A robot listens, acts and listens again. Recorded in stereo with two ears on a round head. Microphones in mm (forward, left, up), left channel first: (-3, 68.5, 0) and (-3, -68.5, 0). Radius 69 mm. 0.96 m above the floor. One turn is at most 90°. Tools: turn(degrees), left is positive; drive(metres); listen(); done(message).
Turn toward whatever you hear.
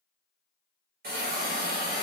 turn(degrees=-65)
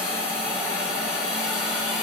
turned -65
done("Facing the hiss, 1 to 2 m away.")